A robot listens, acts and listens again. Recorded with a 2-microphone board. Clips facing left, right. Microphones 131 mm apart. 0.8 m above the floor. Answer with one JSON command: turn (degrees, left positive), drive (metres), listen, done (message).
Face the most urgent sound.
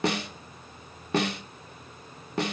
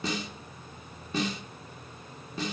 {"listen": true}
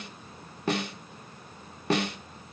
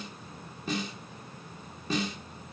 {"listen": true}
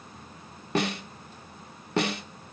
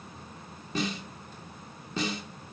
{"done": "I can't make out anything urgent, only a snare drum."}